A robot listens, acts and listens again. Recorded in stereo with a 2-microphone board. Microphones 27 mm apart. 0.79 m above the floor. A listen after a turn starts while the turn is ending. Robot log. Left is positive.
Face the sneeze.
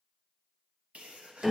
note: The sneeze: about 55° right or 125° right.
cmd yaw -55
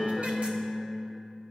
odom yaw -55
cmd idle
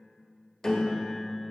end: I heard a sneeze, but can't make it out now. It was about straight ahead or 70° right.